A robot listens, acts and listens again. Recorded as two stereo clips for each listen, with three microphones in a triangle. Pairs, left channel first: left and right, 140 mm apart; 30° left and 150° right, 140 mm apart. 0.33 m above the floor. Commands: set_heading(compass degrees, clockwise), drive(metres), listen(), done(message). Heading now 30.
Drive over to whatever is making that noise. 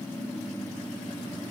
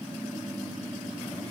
listen()
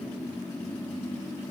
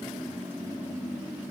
listen()
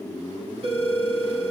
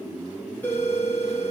set_heading(75)
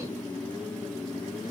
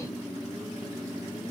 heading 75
listen()
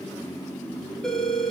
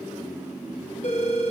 drive(1.0)
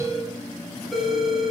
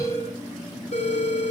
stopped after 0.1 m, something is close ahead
done("Something is in my way. I am facing the phone ringing but have not reached it.")